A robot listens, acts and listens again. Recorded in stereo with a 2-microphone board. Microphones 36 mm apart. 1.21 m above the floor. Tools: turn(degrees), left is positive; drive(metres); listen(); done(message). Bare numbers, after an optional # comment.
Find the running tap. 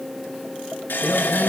# The running tap: about 70° left or 110° left.
turn(70)
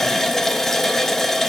# So it is at 10° left.
turn(10)
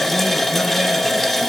done("Found it: a running tap, straight ahead, 1 to 2 m away.")